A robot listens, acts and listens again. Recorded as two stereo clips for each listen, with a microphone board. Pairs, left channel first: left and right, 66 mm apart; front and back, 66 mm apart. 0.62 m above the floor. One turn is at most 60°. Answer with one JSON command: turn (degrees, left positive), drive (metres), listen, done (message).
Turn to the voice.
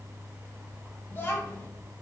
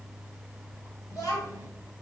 {"turn": 30}
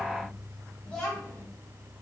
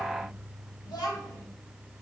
{"turn": 15}
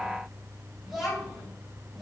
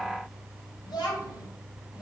{"done": "Facing the child speaking, 2 to 4 m away."}